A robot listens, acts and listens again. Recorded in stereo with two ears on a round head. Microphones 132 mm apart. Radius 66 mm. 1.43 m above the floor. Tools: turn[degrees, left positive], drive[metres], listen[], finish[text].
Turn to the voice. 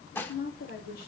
Thought: The woman speaking: about 65° left or 115° left.
Action: turn[65]
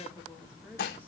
Thought: So it is at 10° right.
Action: turn[-10]
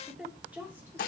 Thought: The woman speaking is now 10° right.
Action: turn[-10]
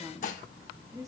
Thought: The woman speaking is now 25° right.
Action: turn[-25]
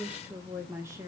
Thought: The woman speaking is now 25° right.
Action: turn[-25]
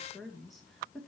Action: finish[Found it: a woman speaking, straight ahead, 2 to 4 m away.]